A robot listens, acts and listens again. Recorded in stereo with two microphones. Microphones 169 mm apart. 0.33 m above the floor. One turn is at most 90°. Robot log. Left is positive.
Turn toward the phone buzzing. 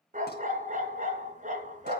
cmd idle
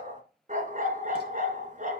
cmd idle
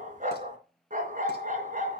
end: I can't make out a phone buzzing, only a dog barking.